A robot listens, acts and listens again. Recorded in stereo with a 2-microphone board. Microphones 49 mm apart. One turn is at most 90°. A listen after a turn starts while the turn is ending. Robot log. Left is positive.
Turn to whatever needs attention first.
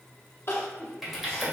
note: The crying: about 55° left or 125° left.
cmd yaw +55
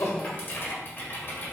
cmd idle
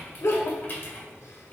note: So it is at 75° left.
cmd yaw +75
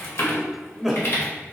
end: Found it: crying, straight ahead, under 1 m away.